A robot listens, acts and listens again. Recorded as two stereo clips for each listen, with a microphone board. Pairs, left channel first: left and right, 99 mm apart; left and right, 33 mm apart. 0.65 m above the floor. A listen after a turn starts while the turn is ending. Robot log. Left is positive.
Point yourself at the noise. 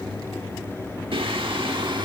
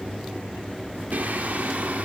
note: The singing: about 55° right or 125° right.
cmd yaw -55
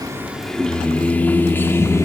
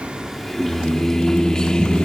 note: So it is at 30° left.
cmd yaw +30
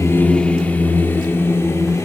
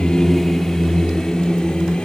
note: The singing is now 30° left.
cmd yaw +30
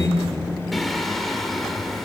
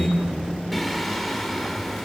end: Found it: singing, straight ahead, 1 to 2 m away.